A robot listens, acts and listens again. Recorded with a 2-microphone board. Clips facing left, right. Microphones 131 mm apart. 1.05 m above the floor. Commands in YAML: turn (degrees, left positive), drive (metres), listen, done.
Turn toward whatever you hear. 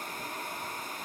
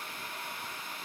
listen: true
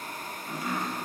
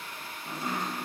turn: -30
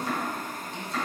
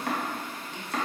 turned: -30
turn: -115
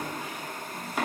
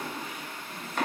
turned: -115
turn: 10
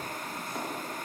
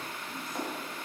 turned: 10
done: "Facing the chopping, under 1 m away."